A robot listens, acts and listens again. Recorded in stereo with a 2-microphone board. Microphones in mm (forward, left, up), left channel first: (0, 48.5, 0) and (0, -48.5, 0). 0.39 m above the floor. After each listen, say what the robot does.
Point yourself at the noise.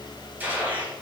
Turn 20° right.
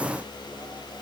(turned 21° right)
Keep listening.
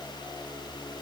I heard a gunshot, but can't make it out now. It was about 5° left or 140° right.